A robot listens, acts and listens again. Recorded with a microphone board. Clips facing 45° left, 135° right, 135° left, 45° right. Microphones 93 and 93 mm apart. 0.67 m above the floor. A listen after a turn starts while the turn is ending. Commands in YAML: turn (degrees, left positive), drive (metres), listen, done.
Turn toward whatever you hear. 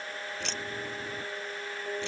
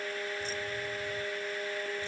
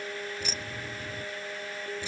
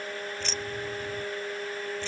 turn: 55
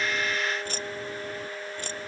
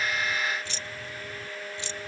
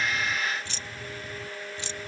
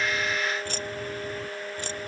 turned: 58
done: "Facing the keys jangling."